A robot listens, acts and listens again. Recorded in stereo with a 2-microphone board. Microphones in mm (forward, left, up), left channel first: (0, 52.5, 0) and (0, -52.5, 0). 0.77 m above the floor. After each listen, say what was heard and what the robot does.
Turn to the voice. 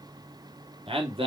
The man speaking: about 60° right or 120° right. Turn 60° right.
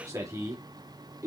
So it is at 35° right. Turn 35° right.
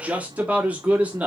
The man speaking is now 15° right. Turn 15° right.
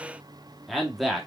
Found it: a man speaking, straight ahead, 1 to 2 m away.